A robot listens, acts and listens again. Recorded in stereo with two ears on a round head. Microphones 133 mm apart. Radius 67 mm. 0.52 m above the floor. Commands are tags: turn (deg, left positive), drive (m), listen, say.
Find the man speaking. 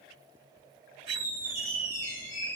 <listen/>
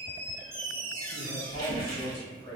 <turn deg="40"/>
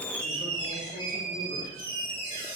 <listen/>
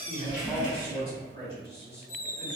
<turn deg="25"/>
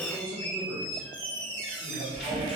<say>Facing the man speaking, 1 to 2 m away.</say>